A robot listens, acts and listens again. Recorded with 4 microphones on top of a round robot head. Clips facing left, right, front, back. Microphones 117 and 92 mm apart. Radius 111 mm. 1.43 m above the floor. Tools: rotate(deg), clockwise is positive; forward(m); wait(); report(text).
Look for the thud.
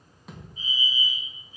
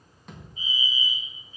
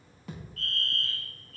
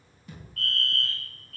report("Facing the thud, 2 to 4 m away.")